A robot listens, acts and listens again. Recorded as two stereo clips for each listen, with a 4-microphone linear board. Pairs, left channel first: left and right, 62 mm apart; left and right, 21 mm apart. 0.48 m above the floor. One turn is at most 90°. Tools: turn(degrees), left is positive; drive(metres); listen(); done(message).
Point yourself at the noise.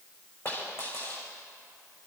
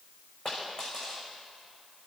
turn(degrees=45)
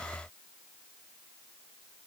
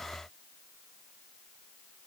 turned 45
listen()
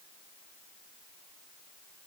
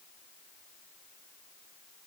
done("I heard a dropped coin, but can't make it out now. It was about straight ahead or 90° left.")